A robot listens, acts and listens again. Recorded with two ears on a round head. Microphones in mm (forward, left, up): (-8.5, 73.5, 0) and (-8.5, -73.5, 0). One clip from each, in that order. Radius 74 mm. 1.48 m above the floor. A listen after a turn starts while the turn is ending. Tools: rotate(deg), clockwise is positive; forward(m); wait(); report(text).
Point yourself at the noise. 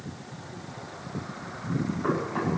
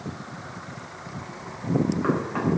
rotate(65)
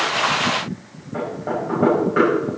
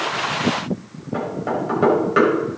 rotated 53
rotate(65)
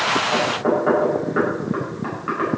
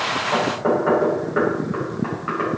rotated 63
report("Found it: knocking, straight ahead.")